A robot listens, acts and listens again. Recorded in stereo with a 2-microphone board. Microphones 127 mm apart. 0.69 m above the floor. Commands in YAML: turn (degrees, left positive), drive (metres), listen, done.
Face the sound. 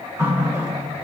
turn: -25
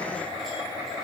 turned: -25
listen: true
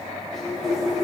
done: "Facing the running tap."